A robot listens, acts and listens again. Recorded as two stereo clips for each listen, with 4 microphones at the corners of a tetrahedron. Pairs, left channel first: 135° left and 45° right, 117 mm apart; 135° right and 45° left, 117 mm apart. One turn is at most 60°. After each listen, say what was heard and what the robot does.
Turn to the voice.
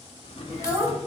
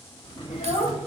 The child speaking: 115° right. Turn 60° right.
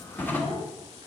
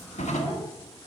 Nothing new. It was at 55° right. Turn 55° right.
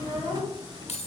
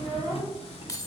The child speaking is now 20° right. Turn 20° right.
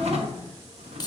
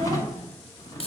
Keep listening.
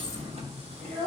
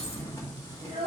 Found it: a child speaking, straight ahead.